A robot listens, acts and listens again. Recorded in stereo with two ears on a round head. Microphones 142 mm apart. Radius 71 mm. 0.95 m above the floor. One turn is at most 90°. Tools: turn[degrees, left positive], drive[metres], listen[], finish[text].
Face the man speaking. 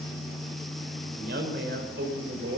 Thought: The man speaking: about 70° right or 110° right.
Action: turn[-70]
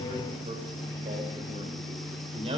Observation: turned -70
Thought: So it is at 40° right.
Action: turn[-40]
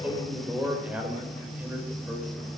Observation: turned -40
Thought: The man speaking is now 10° right.
Action: turn[-10]
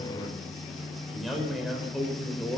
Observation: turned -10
Action: finish[Facing the man speaking, over 4 m away.]